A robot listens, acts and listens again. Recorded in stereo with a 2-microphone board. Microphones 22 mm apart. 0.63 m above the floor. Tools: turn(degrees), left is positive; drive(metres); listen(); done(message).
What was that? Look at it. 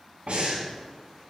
turn(degrees=-90)
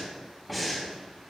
done("Found it: breathing, straight ahead, 2 to 4 m away.")